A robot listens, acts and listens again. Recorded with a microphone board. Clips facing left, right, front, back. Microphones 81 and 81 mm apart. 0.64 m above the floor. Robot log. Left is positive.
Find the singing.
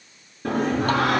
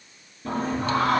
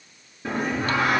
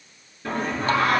note: The singing: 80° left.
cmd yaw +80
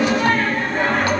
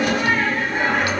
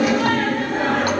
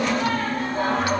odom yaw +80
note: The singing is now 10° right.
cmd yaw -10
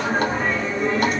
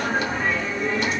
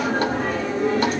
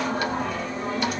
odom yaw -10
end: Found it: singing, straight ahead.